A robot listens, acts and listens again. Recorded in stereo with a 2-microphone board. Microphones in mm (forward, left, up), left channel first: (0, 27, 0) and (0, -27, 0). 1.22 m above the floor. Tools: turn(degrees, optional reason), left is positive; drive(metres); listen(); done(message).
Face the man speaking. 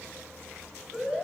listen()
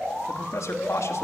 turn(degrees=65, reason="The man speaking: about 65° left or 115° left.")
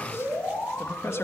turn(degrees=60, reason="So it is at 60° left.")
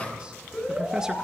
listen()
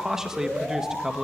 turn(degrees=-10, reason="The man speaking is now 10° right.")
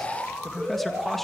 done("Facing the man speaking.")